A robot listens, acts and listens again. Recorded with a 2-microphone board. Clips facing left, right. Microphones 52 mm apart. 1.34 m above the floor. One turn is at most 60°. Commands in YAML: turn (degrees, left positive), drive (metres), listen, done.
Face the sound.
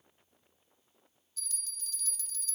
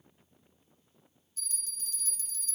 turn: -40
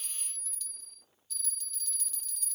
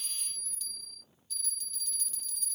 done: "Facing the bell."